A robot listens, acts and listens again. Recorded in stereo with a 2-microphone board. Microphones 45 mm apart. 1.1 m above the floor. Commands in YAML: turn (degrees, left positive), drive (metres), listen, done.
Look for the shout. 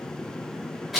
listen: true
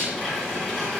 listen: true
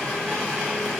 done: "I can't make out a shout, only a blender."